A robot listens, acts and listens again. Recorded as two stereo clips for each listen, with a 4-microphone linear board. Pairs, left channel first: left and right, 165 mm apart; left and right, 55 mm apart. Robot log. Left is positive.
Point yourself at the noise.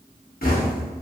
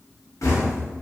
note: The knocking: about 65° left or 115° left.
cmd yaw +65
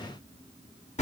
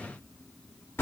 note: So it is at 45° left.
cmd yaw +45
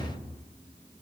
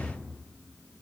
cmd idle
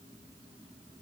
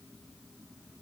cmd idle
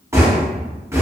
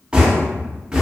note: The knocking is now 15° right.
cmd yaw -15
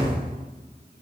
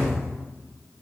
cmd idle
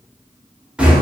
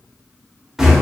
end: Found it: knocking, straight ahead.